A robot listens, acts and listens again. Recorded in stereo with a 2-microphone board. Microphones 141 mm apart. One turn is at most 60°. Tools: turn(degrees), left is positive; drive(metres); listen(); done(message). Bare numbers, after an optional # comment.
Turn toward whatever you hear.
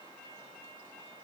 listen()
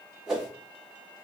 turn(-30)
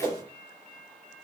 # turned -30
# So it is at 145° right.
turn(-60)
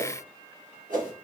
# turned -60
# The whoosh is now 75° right.
turn(-60)
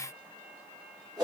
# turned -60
# The whoosh is now 25° right.
turn(-25)
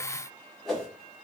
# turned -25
done("Found it: a whoosh, straight ahead.")